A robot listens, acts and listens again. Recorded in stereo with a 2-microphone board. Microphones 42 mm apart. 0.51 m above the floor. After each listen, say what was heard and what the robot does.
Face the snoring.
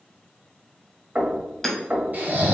The snoring: about 45° right or 135° right. Turn 45° right.
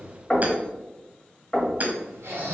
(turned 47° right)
So it is at 85° right. Turn 85° right.
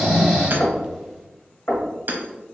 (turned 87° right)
Facing the snoring, 1 to 2 m away.